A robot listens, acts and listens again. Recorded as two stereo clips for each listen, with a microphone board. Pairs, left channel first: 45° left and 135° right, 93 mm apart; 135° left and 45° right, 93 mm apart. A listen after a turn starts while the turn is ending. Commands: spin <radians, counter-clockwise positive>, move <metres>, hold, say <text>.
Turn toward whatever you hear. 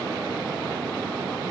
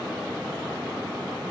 hold
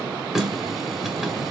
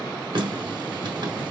spin -0.87
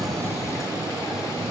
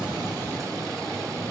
hold
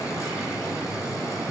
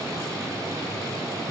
hold
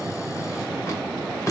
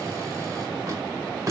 say Found it: a running tap, straight ahead.